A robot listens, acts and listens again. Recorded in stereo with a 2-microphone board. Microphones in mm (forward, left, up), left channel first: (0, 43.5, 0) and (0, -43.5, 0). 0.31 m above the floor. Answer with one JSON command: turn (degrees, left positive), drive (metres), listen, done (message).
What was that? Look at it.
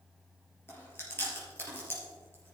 {"turn": 25}
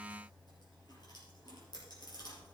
{"turn": 130}
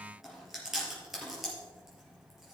{"done": "Facing the chewing, 2 to 4 m away."}